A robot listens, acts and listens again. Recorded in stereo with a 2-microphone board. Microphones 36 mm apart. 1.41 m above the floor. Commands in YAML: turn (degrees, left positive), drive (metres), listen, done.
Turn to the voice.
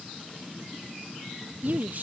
turn: -60
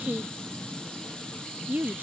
turn: -60
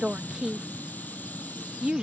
turn: -25
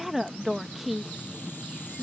done: "Facing the woman speaking."